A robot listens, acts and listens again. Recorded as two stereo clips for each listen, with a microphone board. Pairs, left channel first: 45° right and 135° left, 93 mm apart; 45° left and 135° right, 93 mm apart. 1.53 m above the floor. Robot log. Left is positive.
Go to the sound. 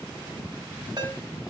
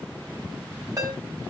note: The ringtone: 175° left.
cmd yaw +175
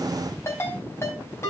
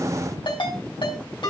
note: The ringtone is now 15° left.
cmd yaw +15
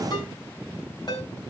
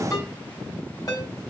cmd fwd 1.0
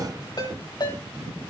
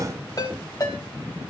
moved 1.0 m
cmd fwd 1.0
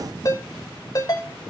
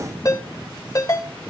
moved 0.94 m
cmd fwd 1.0
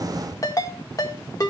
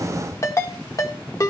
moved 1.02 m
cmd fwd 1.0
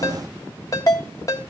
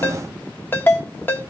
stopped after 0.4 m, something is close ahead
note: The ringtone is now 15° right.
cmd yaw -15
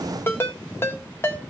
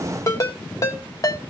end: I am next to the ringtone.